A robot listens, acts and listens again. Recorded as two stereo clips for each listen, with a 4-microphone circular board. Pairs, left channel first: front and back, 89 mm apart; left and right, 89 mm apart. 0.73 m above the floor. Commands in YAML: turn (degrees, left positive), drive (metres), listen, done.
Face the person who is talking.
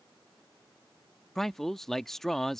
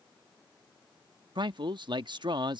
turn: -85
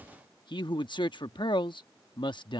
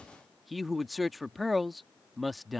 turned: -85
done: "Found it: a man speaking, straight ahead."